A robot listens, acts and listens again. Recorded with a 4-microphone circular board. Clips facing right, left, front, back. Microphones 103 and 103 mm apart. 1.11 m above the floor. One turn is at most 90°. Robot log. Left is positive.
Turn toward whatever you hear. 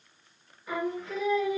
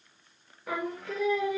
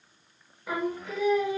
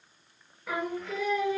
note: The singing: 75° left.
cmd yaw +75
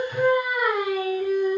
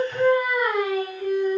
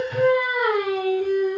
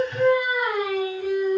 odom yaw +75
note: The singing is now 25° right.
cmd yaw -25
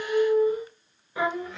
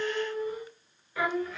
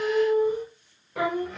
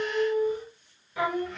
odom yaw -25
note: The singing is now 30° right.
cmd yaw -30
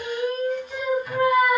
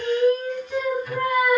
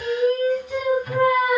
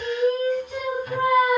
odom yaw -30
end: Facing the singing, 1 to 2 m away.